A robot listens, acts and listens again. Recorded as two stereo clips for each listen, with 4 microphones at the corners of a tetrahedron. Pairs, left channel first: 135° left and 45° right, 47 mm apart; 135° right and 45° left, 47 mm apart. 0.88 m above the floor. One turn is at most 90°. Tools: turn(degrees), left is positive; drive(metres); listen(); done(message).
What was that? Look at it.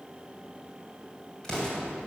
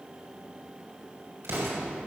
turn(degrees=60)
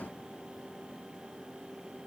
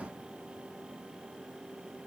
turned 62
done("Facing where the explosion came from. I can't hear it now.")